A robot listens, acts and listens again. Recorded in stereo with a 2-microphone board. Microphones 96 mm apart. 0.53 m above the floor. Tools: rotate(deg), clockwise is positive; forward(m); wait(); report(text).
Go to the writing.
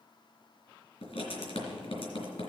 rotate(-90)
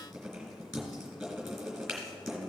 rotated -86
forward(1.0)
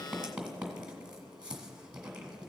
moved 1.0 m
rotate(10)
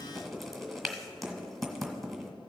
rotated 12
forward(1.0)
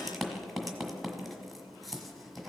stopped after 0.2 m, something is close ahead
report("Arrived at the writing, straight ahead.")